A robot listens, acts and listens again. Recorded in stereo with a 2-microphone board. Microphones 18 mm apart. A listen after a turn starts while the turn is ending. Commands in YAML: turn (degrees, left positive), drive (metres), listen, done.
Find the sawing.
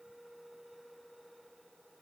listen: true
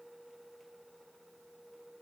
listen: true
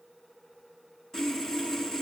turn: 30
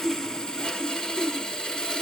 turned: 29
turn: 120
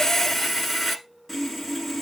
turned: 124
done: "Facing the sawing."